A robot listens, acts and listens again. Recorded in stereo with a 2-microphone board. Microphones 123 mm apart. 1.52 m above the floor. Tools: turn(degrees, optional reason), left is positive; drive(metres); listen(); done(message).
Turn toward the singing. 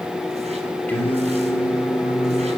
turn(degrees=20, reason="The singing: about 20° left or 160° left.")
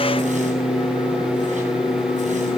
turn(degrees=130, reason="So it is at 130° left.")
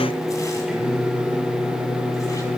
turn(degrees=-10, reason="The singing is now 10° right.")
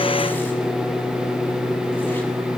done("Facing the singing.")